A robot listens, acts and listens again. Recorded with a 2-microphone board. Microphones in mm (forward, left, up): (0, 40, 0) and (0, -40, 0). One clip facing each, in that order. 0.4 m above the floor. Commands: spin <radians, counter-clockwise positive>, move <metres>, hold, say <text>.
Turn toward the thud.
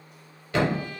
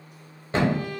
spin -0.52
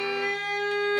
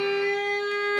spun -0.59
hold
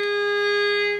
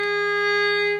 say I heard a thud, but can't make it out now. It was about 5° left or 115° right.